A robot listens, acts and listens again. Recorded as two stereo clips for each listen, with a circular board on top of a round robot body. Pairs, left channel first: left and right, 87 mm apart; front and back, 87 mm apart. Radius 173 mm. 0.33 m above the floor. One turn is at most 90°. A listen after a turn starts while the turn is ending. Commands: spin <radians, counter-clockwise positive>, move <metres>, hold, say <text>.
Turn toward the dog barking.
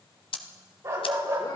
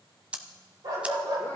spin -1.57
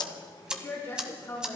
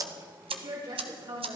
spin -0.96
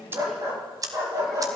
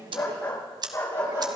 spin -0.79
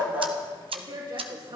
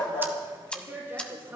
hold
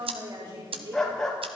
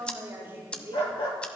say Facing the dog barking, 2 to 4 m away.